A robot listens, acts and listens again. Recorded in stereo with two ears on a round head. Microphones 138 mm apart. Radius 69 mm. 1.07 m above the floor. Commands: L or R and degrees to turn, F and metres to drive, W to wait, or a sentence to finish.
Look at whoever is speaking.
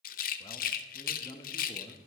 L25
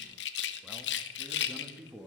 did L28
Found it: a man speaking, straight ahead, 1 to 2 m away.